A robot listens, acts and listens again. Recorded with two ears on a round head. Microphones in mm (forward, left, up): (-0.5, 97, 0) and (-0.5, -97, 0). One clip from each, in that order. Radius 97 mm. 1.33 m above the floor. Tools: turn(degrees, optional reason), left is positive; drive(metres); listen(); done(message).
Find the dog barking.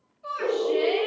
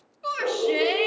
turn(degrees=30)
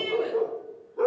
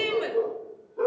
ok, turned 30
turn(degrees=160, reason="So it is at 160° left.")
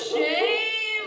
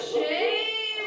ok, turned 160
turn(degrees=50, reason="The dog barking is now 50° left.")
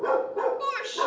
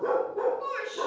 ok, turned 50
turn(degrees=40, reason="The dog barking is now 40° left.")
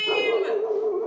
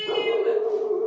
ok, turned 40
turn(degrees=30, reason="The dog barking is now 30° left.")
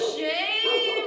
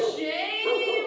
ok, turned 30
turn(degrees=10, reason="The dog barking is now 10° left.")
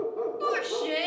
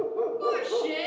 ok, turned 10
done("Facing the dog barking, 1 to 2 m away.")